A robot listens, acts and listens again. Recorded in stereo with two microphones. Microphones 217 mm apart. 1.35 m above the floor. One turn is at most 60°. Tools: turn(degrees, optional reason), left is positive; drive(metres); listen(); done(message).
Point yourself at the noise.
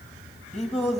turn(degrees=30, reason="The singing: about 30° left or 150° left.")
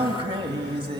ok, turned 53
turn(degrees=-25, reason="So it is at 25° right.")
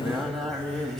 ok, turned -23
done("Facing the singing.")